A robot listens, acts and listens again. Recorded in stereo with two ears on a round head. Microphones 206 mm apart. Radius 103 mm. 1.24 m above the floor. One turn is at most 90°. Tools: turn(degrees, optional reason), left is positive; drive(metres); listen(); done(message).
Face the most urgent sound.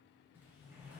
listen()
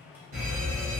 turn(degrees=-60, reason="The fire alarm: about 60° right or 120° right.")
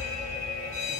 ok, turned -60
turn(degrees=-40, reason="So it is at 40° right.")
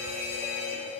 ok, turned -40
turn(degrees=-10, reason="The fire alarm is now 10° right.")
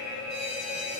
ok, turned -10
done("Facing the fire alarm, 1 to 2 m away.")